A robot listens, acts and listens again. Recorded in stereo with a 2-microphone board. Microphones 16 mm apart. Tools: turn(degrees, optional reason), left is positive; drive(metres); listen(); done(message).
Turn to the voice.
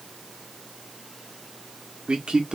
turn(degrees=-65, reason="The man speaking: about 65° right or 115° right.")
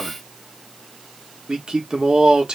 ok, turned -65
turn(degrees=-50, reason="So it is at 50° right.")
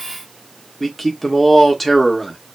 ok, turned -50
turn(degrees=10, reason="The man speaking is now 10° left.")
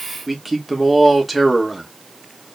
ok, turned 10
done("Found it: a man speaking, straight ahead, 1 to 2 m away.")